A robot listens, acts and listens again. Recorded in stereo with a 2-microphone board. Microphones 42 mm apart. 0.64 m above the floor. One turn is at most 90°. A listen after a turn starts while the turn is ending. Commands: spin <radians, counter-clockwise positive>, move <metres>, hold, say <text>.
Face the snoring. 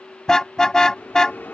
hold
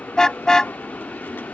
hold
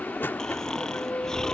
spin 0.52
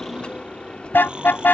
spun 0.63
spin -0.44
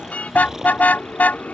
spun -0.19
spin -0.17
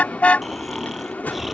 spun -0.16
say Facing the snoring.